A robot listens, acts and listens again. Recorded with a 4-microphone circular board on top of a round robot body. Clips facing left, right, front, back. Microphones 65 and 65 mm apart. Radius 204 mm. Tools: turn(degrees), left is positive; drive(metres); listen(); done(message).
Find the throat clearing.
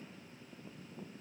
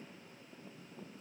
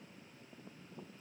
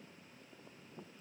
listen()
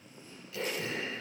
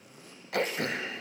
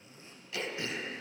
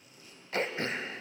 turn(degrees=-125)
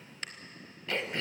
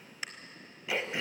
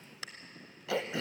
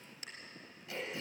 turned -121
done("Found it: throat clearing, straight ahead, 1 to 2 m away.")